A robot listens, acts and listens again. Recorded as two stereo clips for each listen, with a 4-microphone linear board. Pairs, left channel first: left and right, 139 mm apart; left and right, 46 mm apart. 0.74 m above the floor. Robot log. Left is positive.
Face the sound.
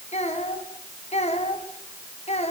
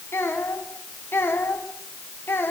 note: The child speaking: about 50° left or 130° left.
cmd yaw +50
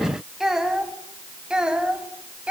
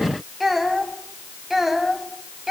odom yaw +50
note: So it is at 10° right.
cmd yaw -10
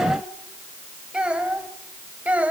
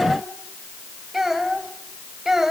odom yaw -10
note: The child speaking is now 10° right.
cmd yaw -10
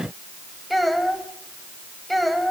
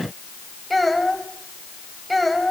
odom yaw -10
end: Facing the child speaking, 2 to 4 m away.